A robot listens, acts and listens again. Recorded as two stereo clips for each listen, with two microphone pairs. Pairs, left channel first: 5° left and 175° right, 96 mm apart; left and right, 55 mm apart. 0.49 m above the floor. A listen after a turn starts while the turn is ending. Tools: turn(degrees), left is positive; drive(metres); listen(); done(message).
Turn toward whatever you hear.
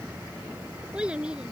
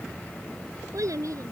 turn(degrees=-95)
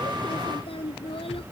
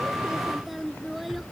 done("Found it: a child speaking, straight ahead.")